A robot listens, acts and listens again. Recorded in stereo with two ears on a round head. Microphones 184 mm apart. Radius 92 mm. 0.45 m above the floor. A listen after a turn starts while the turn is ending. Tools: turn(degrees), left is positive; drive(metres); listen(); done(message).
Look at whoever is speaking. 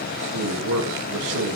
turn(degrees=-75)
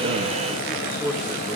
done("Facing the man speaking, over 4 m away.")